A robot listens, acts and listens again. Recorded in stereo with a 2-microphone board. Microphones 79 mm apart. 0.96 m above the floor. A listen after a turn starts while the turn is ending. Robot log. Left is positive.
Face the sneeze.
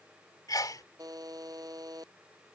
note: The sneeze: about 50° left or 130° left.
cmd yaw +50
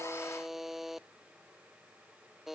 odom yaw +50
cmd idle
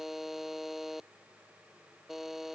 end: I heard a sneeze, but can't make it out now. It was about straight ahead or 80° left.